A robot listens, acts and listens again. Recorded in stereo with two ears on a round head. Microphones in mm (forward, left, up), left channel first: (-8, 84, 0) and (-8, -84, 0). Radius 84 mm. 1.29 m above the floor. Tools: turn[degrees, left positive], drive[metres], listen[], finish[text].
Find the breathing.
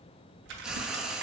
Action: listen[]
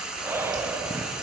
Action: turn[-30]
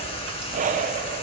Thought: So it is at 135° right.
Action: turn[-135]
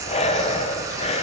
Thought: The breathing is now 35° left.
Action: turn[35]
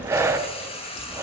Thought: The breathing is now 15° right.
Action: turn[-15]
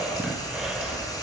Action: finish[Found it: breathing, straight ahead.]